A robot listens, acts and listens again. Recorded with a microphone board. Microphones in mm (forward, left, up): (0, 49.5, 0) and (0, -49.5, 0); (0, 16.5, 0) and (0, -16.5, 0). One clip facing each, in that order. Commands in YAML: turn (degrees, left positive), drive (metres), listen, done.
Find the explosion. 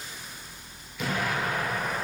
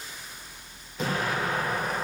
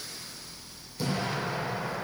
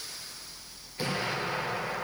turn: -35
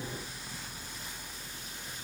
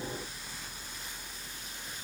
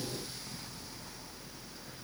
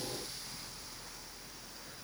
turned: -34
listen: true
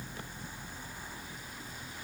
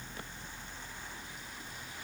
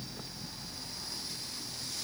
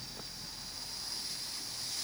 done: "I heard an explosion, but can't make it out now. It was about 5° right or 110° right."